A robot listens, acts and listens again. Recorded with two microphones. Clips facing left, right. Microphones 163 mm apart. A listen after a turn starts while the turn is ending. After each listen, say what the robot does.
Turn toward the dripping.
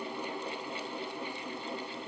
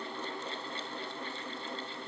Keep listening.
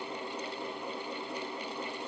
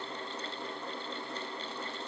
Keep listening.
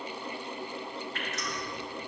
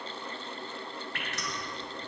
Turn 70° right.
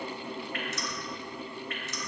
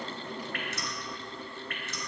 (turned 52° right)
Turn 55° right.
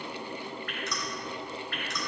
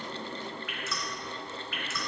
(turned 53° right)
Found it: dripping, straight ahead, 2 to 4 m away.